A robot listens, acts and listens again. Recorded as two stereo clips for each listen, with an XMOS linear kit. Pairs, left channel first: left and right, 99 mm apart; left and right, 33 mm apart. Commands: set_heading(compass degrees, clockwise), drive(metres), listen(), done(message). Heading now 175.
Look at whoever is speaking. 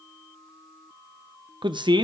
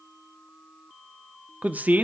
set_heading(225)
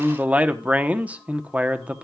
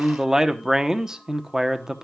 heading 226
set_heading(241)
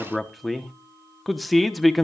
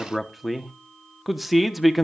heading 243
done("Facing the man speaking, under 1 m away.")